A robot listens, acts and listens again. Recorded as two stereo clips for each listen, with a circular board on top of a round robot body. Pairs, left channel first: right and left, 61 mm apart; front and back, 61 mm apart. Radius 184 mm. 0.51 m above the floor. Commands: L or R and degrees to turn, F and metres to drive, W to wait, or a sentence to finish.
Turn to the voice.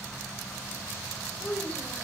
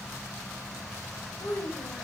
R20
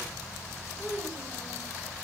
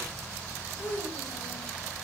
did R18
Found it: a child speaking, straight ahead, 2 to 4 m away.